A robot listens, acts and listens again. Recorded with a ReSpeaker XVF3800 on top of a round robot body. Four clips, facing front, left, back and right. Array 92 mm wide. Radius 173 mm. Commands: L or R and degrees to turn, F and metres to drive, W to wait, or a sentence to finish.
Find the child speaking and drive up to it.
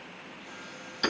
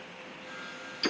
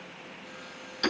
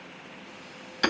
W
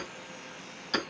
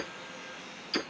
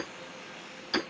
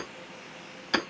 W
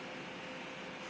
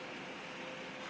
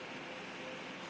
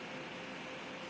I can't make out a child speaking, only hammering.